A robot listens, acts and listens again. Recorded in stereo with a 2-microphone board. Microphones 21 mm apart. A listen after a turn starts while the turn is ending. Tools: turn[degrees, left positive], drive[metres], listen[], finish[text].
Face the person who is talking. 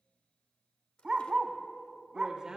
Thought: The man speaking: about 25° right or 155° right.
Action: turn[-25]
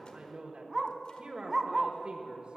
Thought: So it is at 125° right.
Action: turn[-125]
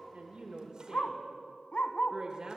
Thought: The man speaking is now 40° right.
Action: turn[-40]
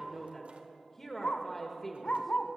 Thought: The man speaking is now 10° left.
Action: turn[10]
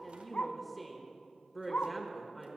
Action: finish[Facing the man speaking.]